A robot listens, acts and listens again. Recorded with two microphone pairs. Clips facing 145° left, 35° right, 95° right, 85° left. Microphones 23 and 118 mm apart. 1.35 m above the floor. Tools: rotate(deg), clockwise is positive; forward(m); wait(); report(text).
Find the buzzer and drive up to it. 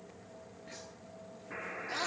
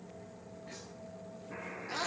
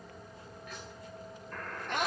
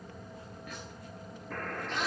rotate(-85)
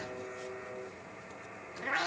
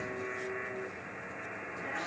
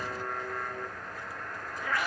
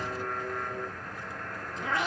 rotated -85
rotate(10)
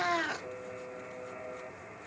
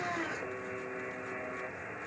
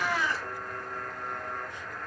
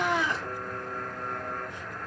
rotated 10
rotate(10)
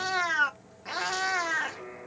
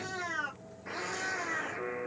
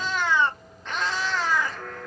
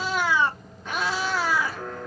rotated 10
forward(1.0)
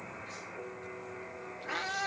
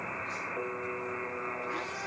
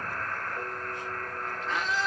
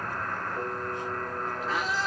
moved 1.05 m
forward(1.0)
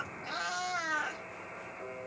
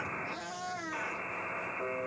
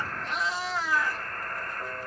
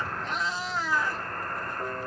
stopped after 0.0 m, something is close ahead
rotate(-15)
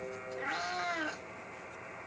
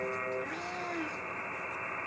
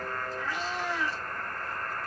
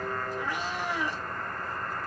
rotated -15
report("Arrived at the buzzer, straight ahead.")